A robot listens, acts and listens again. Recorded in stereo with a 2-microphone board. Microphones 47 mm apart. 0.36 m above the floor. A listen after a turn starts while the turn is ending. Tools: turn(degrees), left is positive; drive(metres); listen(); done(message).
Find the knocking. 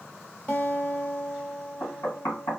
turn(degrees=70)
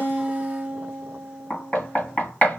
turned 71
turn(degrees=35)
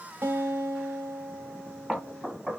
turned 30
done("Facing the knocking.")